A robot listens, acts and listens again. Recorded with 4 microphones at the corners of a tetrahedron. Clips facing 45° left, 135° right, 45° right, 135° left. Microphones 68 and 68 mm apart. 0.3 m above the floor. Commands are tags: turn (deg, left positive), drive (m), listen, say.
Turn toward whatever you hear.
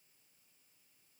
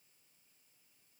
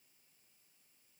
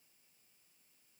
<listen/>
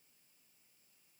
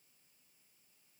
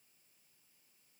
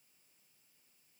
<listen/>
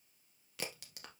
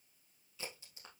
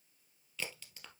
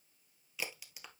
<turn deg="55"/>
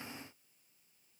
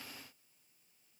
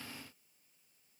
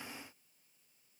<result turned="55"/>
<say>Facing where the crack came from. I can't hear it now.</say>